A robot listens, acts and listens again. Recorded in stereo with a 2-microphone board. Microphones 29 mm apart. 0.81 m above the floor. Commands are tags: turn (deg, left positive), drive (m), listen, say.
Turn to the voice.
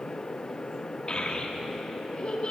<turn deg="30"/>
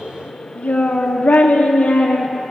<turn deg="115"/>
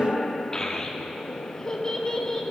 <turn deg="30"/>
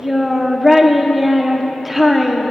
<say>Found it: a child speaking, straight ahead, 1 to 2 m away.</say>